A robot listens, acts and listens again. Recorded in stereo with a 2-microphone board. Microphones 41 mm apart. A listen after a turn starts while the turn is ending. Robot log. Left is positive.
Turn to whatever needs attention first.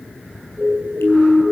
note: The siren: about 45° right or 135° right.
cmd yaw -45
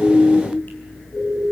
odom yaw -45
end: Found it: a siren, straight ahead, over 4 m away.